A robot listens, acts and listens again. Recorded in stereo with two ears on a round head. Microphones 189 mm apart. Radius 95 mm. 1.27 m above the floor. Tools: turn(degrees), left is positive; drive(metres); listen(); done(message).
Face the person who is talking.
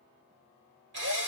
listen()
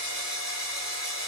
listen()
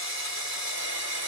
done("I can't make out anyone speaking, only a drill.")